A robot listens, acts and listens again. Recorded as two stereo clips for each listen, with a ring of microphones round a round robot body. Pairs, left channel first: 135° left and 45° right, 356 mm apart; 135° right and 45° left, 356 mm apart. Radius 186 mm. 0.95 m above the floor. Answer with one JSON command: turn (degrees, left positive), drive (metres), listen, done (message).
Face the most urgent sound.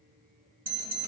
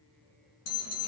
{"turn": -110}
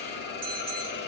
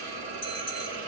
{"turn": -20}
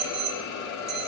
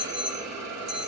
{"done": "Facing the alarm."}